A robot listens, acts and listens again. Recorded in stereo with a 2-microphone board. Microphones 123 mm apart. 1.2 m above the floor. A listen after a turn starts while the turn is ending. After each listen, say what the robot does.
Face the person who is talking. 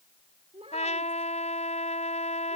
Turn 55° right.
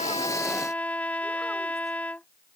Keep listening.
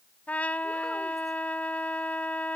Keep listening.
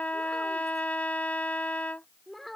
Facing the child speaking.